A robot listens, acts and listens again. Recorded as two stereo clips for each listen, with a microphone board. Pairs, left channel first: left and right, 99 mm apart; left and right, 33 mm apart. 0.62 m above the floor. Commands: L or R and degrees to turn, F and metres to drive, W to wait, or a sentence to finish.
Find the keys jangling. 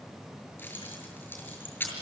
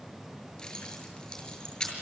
L20
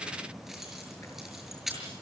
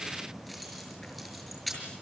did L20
Facing the keys jangling.